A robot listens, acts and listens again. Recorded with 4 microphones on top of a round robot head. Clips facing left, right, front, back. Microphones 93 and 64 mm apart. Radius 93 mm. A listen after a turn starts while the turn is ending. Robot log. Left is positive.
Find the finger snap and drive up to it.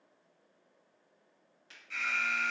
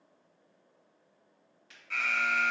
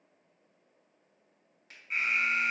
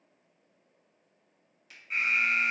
note: The finger snap: 35° left.
cmd yaw +35
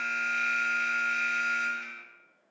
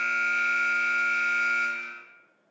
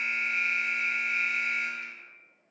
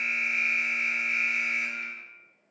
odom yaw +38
cmd idle
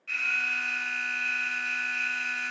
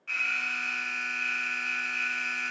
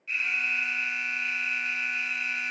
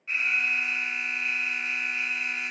cmd idle
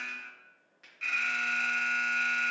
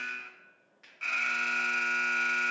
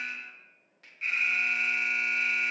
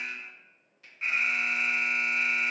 cmd fwd 1.0
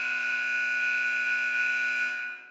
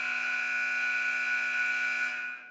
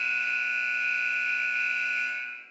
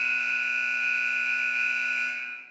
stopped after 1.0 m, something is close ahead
cmd idle
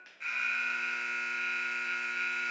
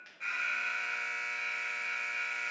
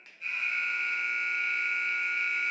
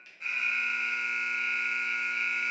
end: Arrived at the finger snap, straight ahead.